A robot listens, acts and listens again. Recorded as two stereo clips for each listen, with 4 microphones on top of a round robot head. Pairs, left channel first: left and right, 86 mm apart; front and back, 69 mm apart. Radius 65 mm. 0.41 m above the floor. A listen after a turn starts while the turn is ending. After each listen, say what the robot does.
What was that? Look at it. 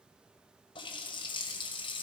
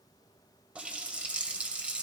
Turn 110° left.
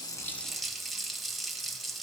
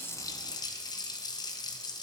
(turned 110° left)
Found it: a running tap, straight ahead, 1 to 2 m away.